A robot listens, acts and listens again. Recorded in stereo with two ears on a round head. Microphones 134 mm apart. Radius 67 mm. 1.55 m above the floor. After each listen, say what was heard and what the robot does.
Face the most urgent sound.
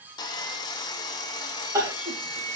The crying: about 20° right or 160° right. Turn 20° right.
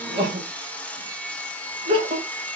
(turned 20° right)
So it is at 145° right. Turn 145° right.
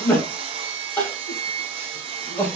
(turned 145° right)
The crying is now 10° left. Turn 10° left.
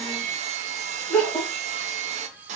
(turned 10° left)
Found it: crying, straight ahead.